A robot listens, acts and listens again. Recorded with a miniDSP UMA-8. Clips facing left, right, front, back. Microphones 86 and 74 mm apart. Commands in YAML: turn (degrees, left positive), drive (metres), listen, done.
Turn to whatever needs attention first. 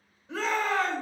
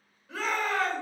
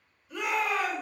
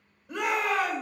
turn: 155
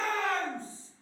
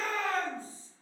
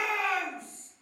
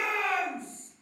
turn: 75
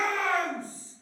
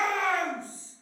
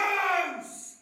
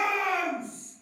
turn: -20
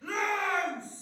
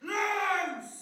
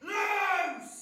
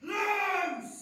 turn: -10
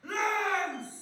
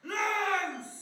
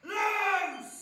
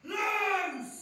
done: "Found it: a shout, straight ahead, 1 to 2 m away."